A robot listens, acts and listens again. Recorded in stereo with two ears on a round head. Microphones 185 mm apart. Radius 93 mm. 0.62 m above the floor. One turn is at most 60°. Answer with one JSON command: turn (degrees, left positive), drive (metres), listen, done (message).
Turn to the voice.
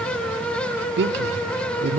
{"turn": -55}
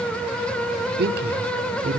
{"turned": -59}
{"turn": -55}
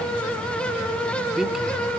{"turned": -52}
{"done": "Found it: a man speaking, straight ahead, 1 to 2 m away."}